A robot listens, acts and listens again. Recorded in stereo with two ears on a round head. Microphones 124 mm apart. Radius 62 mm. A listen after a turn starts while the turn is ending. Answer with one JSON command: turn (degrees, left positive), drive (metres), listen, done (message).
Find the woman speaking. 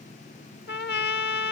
{"listen": true}
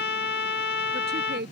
{"turn": -90}
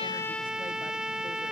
{"listen": true}
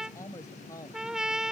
{"turn": 20}
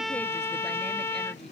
{"listen": true}
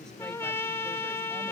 {"listen": true}
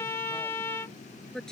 {"done": "Found it: a woman speaking, straight ahead."}